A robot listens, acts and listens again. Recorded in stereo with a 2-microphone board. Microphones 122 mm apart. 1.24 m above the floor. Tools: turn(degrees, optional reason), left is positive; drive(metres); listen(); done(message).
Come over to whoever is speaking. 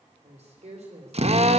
turn(degrees=-65, reason="The woman speaking: about 65° right or 115° right.")
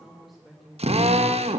drive(metres=1.0)
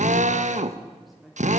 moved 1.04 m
drive(metres=1.0)
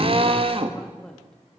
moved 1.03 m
drive(metres=1.0)
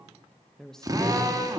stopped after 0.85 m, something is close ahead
done("I am next to the woman speaking.")